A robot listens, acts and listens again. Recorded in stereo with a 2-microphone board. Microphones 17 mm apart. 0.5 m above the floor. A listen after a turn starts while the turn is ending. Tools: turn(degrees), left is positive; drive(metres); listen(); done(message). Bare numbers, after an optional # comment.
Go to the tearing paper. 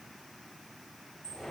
listen()
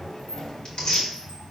# The tearing paper: about 65° left or 115° left.
turn(65)
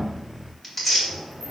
# So it is at 15° left.
turn(15)
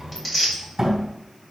drive(1.0)
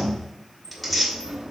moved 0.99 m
drive(1.0)
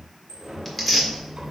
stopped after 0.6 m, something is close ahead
done("I am next to the tearing paper.")